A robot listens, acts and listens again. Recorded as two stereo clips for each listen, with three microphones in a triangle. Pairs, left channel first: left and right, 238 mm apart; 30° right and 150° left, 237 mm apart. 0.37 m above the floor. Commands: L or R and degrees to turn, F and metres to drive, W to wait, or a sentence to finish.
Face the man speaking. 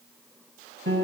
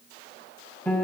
W
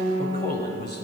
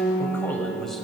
L60
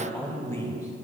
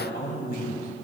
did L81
L15
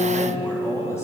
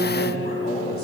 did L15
L15
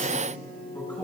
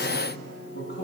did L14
L10
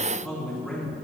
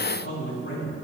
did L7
Facing the man speaking, 2 to 4 m away.